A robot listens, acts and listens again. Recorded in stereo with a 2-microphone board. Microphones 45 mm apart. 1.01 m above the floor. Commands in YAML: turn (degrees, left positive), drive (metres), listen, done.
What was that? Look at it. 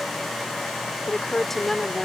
turn: 30
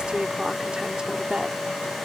turn: -25
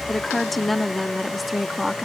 done: "Facing the woman speaking."